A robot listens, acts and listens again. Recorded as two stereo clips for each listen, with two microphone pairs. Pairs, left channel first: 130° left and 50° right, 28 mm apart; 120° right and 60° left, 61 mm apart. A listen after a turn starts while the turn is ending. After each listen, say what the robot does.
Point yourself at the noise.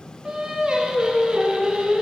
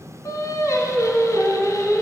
Turn 110° right.
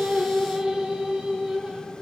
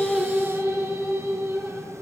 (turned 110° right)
Found it: singing, straight ahead.